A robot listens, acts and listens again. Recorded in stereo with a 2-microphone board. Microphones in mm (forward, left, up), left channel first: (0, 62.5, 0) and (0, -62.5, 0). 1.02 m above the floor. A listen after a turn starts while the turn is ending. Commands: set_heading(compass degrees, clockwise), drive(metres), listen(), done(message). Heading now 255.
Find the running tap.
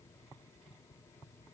listen()
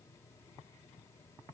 listen()
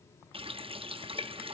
set_heading(300)
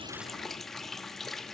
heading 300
done("Facing the running tap, under 1 m away.")